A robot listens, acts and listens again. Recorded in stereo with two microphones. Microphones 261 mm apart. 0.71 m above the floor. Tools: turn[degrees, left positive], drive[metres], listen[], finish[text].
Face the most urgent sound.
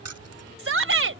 Thought: The shout: about 60° right or 120° right.
Action: turn[-60]
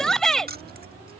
Action: finish[Facing the shout.]